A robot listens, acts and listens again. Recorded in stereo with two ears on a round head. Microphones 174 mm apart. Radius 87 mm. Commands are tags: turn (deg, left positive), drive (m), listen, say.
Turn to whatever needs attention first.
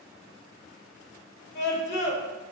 <turn deg="60"/>
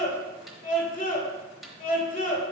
<turn deg="45"/>
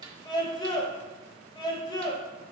<turn deg="25"/>
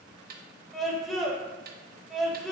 <say>Facing the scream.</say>